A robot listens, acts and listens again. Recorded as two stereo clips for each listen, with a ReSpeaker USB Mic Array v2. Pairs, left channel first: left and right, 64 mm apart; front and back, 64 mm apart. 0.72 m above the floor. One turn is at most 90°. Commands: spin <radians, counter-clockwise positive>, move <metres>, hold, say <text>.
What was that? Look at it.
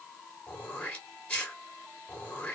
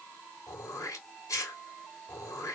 spin 0.44
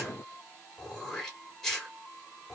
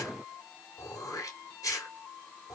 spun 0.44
spin 0.17
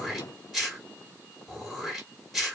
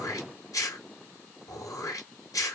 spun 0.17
say Found it: throat clearing, straight ahead, 2 to 4 m away.